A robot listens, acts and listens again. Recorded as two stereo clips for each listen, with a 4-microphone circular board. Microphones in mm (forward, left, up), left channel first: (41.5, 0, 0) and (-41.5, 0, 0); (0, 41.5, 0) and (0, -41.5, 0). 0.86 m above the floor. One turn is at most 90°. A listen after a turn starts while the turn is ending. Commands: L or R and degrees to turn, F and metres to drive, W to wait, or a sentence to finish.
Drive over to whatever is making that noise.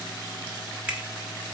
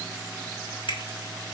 L90
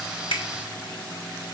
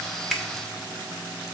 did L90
L15
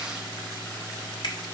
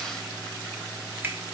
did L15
R25
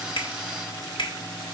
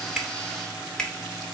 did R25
L10
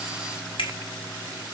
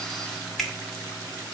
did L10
F1.0
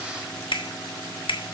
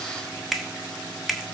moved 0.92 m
F1.0
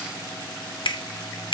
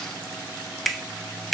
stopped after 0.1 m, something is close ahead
I am next to the finger snap.